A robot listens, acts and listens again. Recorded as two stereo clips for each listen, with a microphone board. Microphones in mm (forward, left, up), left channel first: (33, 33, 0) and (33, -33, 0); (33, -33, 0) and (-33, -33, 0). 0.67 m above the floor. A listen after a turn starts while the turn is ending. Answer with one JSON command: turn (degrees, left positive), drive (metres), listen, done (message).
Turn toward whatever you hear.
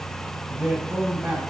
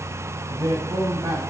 {"turn": -160}
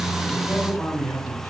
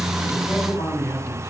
{"done": "Facing the man speaking, over 4 m away."}